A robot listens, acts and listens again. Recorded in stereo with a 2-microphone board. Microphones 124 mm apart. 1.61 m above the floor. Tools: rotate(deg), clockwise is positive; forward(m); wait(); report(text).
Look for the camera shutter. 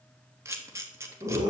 rotate(20)
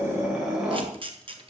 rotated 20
rotate(135)
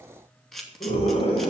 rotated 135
report("Found it: a camera shutter, straight ahead.")